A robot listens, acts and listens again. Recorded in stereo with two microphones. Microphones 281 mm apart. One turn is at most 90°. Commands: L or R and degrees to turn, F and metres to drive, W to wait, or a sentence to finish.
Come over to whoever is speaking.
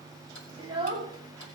R15
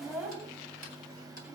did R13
F1.0
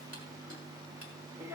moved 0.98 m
R10
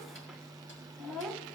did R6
F1.0
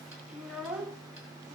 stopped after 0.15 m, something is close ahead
I am next to the child speaking.